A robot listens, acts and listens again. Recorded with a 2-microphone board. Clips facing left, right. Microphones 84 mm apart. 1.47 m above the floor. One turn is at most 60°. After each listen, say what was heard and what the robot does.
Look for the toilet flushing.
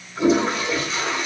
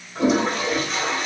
The toilet flushing: about 65° right or 115° right. Turn 60° right.
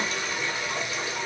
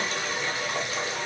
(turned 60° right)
So it is at 40° right. Turn 40° right.
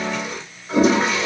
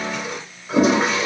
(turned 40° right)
Found it: a toilet flushing, straight ahead.